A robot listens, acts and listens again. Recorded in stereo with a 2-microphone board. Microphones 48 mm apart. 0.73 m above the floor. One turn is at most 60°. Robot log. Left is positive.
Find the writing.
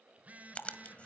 note: The writing: about 25° left or 155° left.
cmd yaw +25
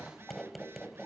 end: Found it: writing, straight ahead.